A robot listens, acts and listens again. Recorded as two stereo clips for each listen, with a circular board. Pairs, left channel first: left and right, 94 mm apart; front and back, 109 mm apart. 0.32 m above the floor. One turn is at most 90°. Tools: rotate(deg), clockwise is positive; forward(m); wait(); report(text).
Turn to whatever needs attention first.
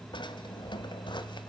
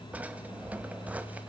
wait()
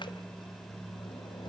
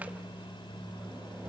wait()
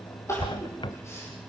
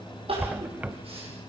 rotate(-90)
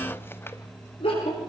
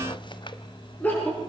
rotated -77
rotate(-75)
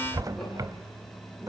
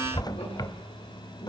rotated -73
wait()
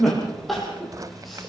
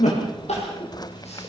report("Facing the crying, over 4 m away.")